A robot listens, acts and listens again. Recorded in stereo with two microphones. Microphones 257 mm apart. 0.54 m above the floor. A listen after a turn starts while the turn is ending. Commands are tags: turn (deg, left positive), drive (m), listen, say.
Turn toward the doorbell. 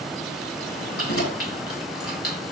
<listen/>
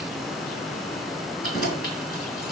<listen/>
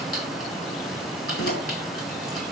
<say>I can't make out a doorbell, only keys jangling.</say>